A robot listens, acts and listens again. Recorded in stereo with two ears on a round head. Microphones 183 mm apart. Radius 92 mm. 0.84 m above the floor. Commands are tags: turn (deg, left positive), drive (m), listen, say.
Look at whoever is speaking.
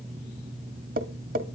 <listen/>
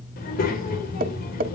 <turn deg="45"/>
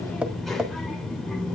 <say>Facing the child speaking.</say>